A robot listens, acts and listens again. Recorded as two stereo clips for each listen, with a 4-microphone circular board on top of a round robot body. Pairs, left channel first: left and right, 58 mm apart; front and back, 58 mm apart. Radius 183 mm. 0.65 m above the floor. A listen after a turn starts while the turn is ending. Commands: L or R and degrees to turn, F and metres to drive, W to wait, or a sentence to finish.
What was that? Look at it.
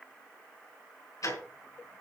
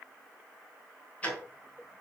L70
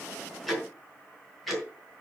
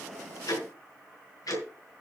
Facing the ticking.